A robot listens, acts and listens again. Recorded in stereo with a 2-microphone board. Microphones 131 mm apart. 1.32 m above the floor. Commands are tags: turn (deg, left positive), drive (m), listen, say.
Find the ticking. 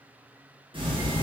<turn deg="-40"/>
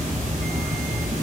<turn deg="-95"/>
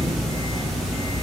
<say>Found it: ticking, straight ahead.</say>